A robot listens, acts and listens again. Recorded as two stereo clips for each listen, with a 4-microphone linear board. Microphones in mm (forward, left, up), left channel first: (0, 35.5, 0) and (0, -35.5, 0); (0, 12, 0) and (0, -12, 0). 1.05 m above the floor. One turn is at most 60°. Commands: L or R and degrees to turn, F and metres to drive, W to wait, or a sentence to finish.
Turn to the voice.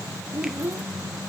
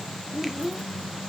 R30
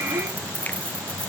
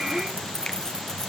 W
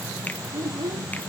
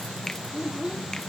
R60
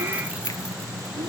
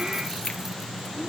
R60
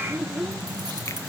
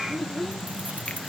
R10
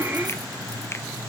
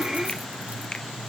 W
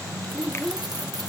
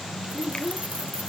Found it: a child speaking, straight ahead.